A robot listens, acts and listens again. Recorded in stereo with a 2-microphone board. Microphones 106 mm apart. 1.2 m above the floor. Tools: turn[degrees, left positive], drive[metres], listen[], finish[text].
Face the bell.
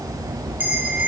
Thought: The bell: about 20° right or 160° right.
Action: turn[-20]
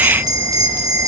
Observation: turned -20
Thought: So it is at 140° right.
Action: turn[-140]
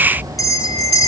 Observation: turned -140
Thought: The bell is now 35° left.
Action: turn[35]
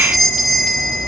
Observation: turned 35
Action: finish[Found it: a bell, straight ahead.]